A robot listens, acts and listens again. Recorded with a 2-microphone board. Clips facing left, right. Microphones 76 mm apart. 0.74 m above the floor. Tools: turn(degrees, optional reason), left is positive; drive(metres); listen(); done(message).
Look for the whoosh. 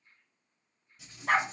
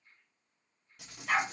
listen()
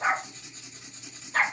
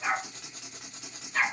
listen()
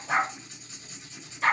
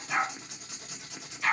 done("I can't make out a whoosh, only a dog barking and writing.")